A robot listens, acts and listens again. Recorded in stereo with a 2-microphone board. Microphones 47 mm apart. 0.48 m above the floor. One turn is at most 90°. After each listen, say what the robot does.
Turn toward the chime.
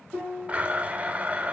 Keep listening.
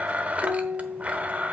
Keep listening.
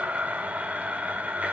I can't make out a chime to turn to.